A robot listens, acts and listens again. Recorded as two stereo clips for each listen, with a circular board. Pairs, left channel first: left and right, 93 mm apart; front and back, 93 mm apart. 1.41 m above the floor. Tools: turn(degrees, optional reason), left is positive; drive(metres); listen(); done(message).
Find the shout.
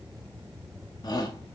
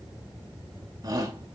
turn(degrees=130, reason="The shout: 130° left.")
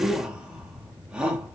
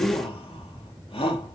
turn(degrees=-10, reason="The shout is now 10° right.")
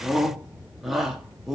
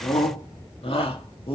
done("Found it: a shout, straight ahead.")